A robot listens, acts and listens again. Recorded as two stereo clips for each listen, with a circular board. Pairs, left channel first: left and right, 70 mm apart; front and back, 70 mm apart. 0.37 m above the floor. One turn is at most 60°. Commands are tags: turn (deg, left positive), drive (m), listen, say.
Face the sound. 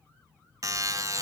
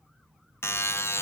<turn deg="-50"/>
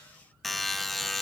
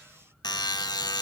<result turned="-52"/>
<say>Facing the buzzer, under 1 m away.</say>